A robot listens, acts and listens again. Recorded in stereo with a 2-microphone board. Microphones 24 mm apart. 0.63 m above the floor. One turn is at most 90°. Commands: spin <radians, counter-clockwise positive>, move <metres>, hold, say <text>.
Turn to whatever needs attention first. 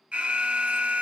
spin -1.05
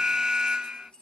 spin -0.61
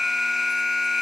spin -0.17
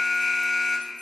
say Found it: an alarm, straight ahead, under 1 m away.